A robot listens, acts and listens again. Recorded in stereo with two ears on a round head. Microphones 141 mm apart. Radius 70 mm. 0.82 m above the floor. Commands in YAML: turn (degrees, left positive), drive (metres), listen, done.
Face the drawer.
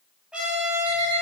listen: true
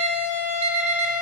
listen: true
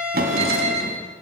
turn: -65
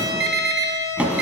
turn: -10
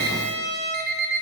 listen: true
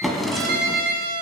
done: "Found it: a drawer, straight ahead."